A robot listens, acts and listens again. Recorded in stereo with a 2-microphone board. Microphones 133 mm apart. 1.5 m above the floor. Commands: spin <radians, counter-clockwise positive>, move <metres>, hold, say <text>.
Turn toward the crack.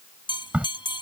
spin -0.52
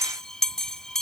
hold
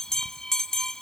say I heard a crack, but can't make it out now. It was about 20° left or 140° right.